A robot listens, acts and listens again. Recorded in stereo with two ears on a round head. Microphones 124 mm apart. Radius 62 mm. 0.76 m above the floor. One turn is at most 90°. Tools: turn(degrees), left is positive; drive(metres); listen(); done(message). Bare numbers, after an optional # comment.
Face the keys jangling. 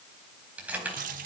turn(-30)
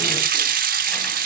listen()
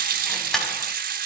done("Facing the keys jangling.")